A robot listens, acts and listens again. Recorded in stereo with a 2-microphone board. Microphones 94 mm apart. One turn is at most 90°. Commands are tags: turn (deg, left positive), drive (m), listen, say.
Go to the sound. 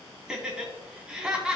<turn deg="-30"/>
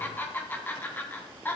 <turn deg="20"/>
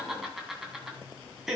<drive m="1.0"/>
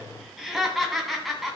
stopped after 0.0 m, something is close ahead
<say>Blocked. The laughter is further on, straight ahead.</say>